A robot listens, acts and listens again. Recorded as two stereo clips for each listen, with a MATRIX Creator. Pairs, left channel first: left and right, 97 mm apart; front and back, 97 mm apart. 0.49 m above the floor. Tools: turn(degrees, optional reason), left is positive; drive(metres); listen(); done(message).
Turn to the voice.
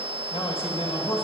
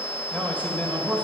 turn(degrees=75, reason="The man speaking: 75° left.")
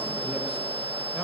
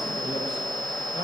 listen()
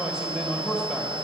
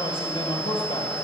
turn(degrees=-10, reason="The man speaking is now 10° right.")
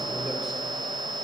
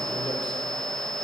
listen()
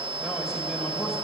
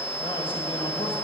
done("Found it: a man speaking, straight ahead, 1 to 2 m away.")